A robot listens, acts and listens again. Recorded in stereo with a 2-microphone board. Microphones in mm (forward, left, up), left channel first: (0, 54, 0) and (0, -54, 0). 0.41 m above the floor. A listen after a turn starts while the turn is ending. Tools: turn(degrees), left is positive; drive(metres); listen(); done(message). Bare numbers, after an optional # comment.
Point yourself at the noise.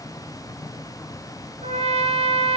# The trumpet: about 70° right or 110° right.
turn(-70)
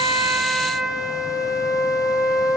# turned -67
done("Facing the trumpet.")